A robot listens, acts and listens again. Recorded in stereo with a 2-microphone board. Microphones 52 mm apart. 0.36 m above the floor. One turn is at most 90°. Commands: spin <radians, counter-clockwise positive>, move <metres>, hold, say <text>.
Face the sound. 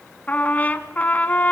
spin 0.52
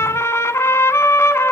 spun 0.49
spin 1.57
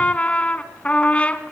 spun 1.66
spin 0.44
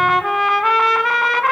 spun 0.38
say Found it: a trumpet, straight ahead.